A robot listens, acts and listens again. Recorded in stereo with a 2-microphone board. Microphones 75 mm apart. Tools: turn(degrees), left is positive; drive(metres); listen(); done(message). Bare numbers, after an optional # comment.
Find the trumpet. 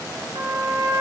# The trumpet: about 70° right or 110° right.
turn(-70)
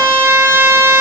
# So it is at 35° right.
turn(-35)
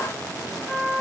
done("Facing the trumpet.")